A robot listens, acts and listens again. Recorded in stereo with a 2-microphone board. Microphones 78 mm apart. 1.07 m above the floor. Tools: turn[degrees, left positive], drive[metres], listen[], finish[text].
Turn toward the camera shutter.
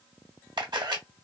Thought: The camera shutter: about 65° right or 115° right.
Action: turn[-65]
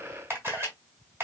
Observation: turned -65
Thought: So it is at 35° right.
Action: turn[-35]
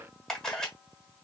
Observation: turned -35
Action: finish[Found it: a camera shutter, straight ahead.]